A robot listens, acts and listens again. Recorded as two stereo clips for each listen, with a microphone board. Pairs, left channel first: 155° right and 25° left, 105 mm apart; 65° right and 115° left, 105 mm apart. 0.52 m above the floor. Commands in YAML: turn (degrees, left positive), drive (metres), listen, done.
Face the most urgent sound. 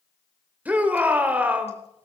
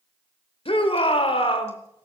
turn: -50
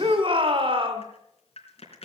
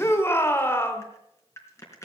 done: "Facing the shout."